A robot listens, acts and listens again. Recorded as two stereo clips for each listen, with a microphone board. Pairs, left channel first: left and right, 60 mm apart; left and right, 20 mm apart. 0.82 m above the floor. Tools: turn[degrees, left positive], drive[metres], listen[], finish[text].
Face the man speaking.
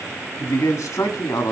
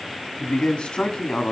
Thought: The man speaking: about 65° left or 115° left.
Action: turn[65]
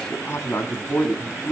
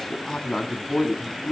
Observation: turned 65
Thought: So it is at 40° left.
Action: turn[40]
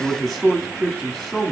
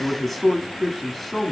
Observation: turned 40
Action: finish[Facing the man speaking.]